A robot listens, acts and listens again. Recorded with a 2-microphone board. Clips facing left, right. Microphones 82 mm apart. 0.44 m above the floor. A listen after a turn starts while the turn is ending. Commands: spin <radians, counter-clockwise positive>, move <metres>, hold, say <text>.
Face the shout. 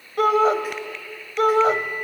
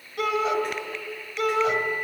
spin 0.70
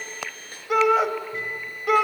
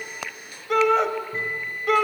say Facing the shout.